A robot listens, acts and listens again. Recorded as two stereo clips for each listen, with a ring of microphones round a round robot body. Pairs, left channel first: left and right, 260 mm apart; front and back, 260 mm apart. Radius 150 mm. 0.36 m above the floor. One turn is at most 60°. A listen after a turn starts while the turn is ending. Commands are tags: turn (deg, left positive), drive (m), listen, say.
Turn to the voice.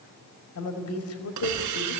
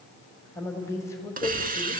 <turn deg="60"/>
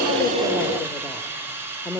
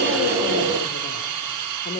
<turn deg="20"/>
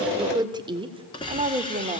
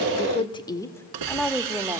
<turn deg="-60"/>
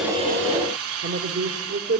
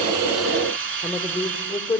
<turn deg="-60"/>
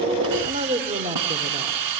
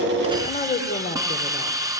<turn deg="-45"/>
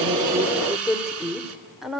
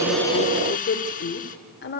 <say>Found it: a woman speaking, straight ahead.</say>